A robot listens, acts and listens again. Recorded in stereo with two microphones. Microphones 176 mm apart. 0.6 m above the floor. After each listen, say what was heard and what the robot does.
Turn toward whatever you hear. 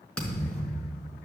Turn 30° left.
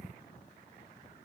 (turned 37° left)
Keep listening.
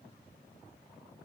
I heard a thud, but can't make it out now. It was about 30° right or 140° left.